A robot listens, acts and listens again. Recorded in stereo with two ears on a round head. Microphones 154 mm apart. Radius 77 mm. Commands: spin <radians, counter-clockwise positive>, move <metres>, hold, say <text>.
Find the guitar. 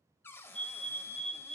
hold
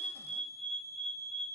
hold
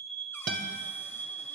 spin -0.96
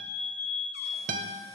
spin -1.05
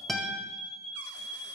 say Facing the guitar.